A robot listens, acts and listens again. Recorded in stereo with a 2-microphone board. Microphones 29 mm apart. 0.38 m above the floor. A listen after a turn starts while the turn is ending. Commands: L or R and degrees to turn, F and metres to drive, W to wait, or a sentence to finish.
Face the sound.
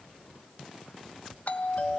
L50
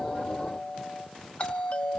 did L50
L65
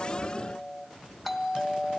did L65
Facing the doorbell, 2 to 4 m away.